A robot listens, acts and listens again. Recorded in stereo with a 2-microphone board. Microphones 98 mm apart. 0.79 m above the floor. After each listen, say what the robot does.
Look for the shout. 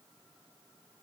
Keep listening.
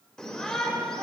Turn 30° left.
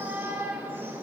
Turn 20° right.
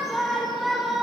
Found it: a shout, straight ahead.